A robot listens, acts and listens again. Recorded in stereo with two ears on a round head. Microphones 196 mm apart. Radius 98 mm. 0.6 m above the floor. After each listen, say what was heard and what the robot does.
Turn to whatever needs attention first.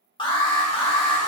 The alarm: about 20° left or 160° left. Turn 20° left.
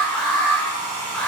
Facing the alarm, under 1 m away.